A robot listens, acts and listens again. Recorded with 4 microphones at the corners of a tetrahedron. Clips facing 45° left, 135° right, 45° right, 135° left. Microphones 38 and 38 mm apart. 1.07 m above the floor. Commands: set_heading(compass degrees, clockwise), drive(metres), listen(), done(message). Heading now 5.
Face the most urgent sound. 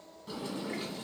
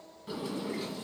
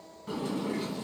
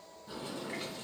listen()
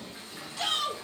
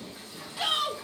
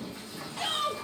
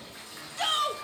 set_heading(215)
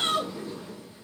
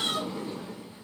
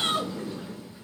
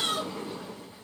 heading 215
set_heading(205)
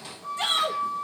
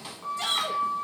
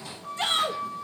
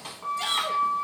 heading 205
done("Found it: a shout, straight ahead.")